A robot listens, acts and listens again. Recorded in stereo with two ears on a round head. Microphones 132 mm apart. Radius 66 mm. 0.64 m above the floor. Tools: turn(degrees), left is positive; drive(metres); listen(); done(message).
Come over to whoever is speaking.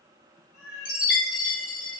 listen()
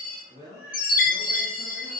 turn(degrees=-60)
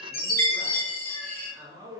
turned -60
turn(degrees=-35)
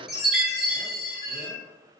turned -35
listen()
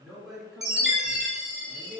drive(metres=1.0)
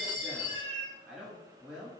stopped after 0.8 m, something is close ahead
turn(degrees=-10)
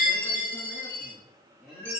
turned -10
done("I am next to the man speaking.")